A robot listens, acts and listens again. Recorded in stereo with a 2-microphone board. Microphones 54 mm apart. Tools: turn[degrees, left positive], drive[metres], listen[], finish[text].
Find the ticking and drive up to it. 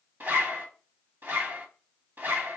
Action: listen[]
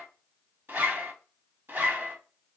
Action: listen[]
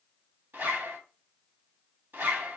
Action: finish[I can't make out ticking to turn to.]